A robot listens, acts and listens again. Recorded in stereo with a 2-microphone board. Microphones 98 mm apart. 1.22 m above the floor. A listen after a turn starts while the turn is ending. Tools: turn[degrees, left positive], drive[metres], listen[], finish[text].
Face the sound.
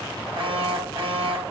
Thought: The alarm: about 65° right or 115° right.
Action: turn[-65]
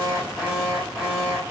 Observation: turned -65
Action: finish[Found it: an alarm, straight ahead.]